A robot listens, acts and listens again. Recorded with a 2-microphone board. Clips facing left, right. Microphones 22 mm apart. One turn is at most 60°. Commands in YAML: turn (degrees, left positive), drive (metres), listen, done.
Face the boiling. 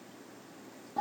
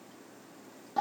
listen: true
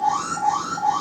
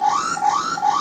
listen: true
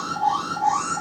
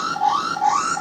done: "I can't make out boiling, only an alarm."